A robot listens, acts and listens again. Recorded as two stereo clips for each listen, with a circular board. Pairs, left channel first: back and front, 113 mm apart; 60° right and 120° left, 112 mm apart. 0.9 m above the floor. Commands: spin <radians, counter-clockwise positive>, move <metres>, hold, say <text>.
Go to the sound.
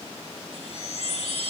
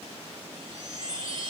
spin 2.88
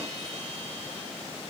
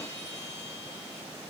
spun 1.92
spin 0.96
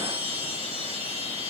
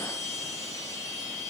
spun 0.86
move 1.0
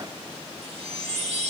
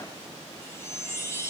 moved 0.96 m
move 1.0
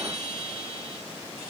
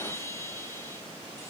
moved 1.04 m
move 1.0
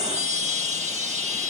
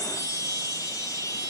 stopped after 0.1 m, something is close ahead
say Arrived at the chime, straight ahead.